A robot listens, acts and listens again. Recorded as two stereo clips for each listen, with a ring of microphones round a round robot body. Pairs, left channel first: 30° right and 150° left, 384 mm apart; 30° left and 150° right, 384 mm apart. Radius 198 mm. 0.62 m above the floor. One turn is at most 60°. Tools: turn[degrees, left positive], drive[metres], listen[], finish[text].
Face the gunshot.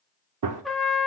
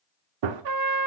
Thought: The gunshot: 165° right.
Action: turn[-60]
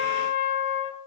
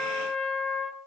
Thought: Nothing new. It was at 105° right.
Action: turn[-60]
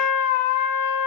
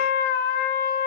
Thought: Nothing new. It was at 45° right.
Action: turn[-45]
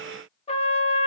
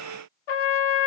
Action: finish[Facing where the gunshot came from. I can't hear it now.]